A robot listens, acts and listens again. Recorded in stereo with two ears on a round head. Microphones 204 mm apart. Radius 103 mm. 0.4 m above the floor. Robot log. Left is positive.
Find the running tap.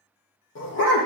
cmd idle
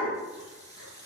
note: The running tap: about 15° left or 165° left.
cmd yaw +15
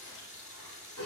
note: So it is at 145° left.
cmd yaw +145
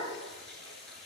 end: Facing the running tap.